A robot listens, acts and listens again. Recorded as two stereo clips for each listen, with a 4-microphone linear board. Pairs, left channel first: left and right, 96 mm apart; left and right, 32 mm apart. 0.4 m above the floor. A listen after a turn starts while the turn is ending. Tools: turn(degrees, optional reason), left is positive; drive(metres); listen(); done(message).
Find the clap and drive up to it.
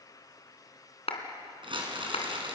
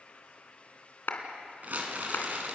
turn(degrees=75, reason="The clap: about 75° left or 105° left.")
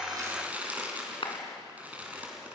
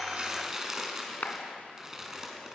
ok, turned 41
turn(degrees=60, reason="So it is at 60° left.")
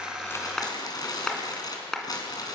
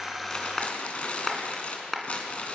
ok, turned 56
drive(metres=1.0)
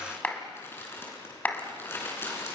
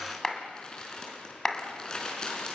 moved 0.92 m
turn(degrees=15, reason="The clap is now 15° left.")
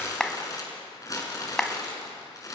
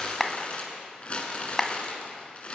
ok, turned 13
drive(metres=1.0)
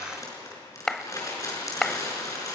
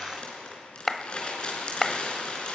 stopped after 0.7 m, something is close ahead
done("Arrived at the clap, straight ahead.")